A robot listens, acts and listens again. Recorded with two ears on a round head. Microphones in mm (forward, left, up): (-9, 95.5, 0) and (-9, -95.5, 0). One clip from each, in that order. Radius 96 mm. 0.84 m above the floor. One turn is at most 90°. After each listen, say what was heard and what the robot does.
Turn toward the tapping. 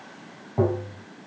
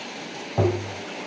Turn 90° right.
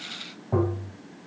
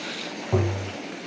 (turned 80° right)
Facing the tapping.